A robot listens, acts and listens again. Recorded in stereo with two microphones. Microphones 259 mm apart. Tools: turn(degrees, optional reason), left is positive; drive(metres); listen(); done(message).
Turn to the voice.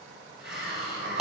listen()
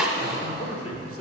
turn(degrees=60, reason="The man speaking: about 60° left or 120° left.")
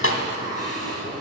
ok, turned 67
listen()
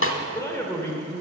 turn(degrees=15, reason="So it is at 15° left.")
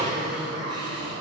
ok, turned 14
listen()
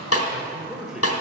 done("Found it: a man speaking, straight ahead.")